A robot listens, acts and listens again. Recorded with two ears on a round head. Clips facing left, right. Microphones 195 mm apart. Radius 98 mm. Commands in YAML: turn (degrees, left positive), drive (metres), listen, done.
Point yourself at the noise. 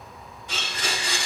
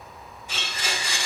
turn: 60
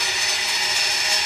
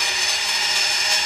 done: "Facing the blender, 2 to 4 m away."